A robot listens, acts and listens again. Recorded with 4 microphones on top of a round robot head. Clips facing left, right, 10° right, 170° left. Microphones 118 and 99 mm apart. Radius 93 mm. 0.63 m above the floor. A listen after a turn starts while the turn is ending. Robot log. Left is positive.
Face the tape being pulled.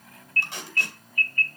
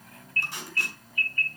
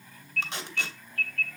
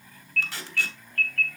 note: The tape being pulled: 55° left.
cmd yaw +55
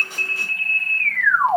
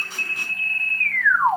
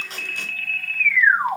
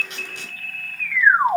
cmd idle
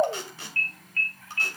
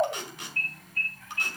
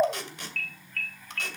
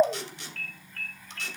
note: The tape being pulled is now 25° left.
cmd yaw +25
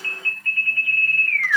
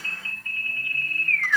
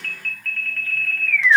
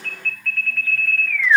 cmd idle
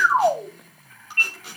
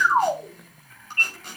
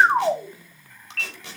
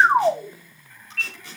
end: Facing the tape being pulled.